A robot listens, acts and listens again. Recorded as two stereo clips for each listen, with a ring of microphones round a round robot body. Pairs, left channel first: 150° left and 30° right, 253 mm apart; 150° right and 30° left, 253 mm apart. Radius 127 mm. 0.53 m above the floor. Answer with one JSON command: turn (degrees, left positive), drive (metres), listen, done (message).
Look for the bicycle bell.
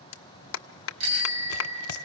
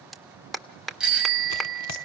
{"turn": -55}
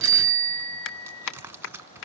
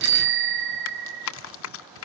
{"turn": 10}
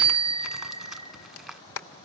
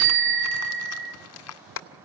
{"done": "Facing the bicycle bell."}